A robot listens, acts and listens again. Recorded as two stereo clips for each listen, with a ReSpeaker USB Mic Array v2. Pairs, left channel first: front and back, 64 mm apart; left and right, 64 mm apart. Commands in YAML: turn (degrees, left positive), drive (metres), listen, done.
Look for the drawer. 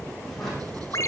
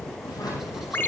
turn: 90
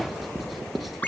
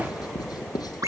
listen: true
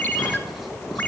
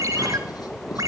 listen: true
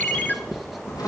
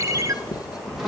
done: "Found it: a drawer, straight ahead, over 4 m away."